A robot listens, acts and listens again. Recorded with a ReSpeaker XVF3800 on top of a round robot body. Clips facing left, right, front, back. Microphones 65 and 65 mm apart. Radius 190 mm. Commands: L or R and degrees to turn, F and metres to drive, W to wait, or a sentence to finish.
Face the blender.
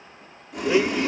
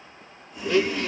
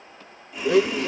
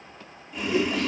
L15
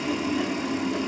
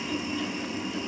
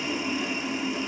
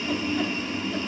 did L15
W
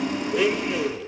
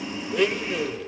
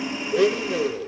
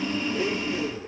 Facing the blender.